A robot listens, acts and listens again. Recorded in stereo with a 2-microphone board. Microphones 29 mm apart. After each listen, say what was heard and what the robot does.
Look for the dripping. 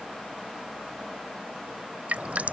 The dripping: about 60° right or 120° right. Turn 60° right.
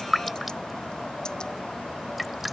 Facing the dripping.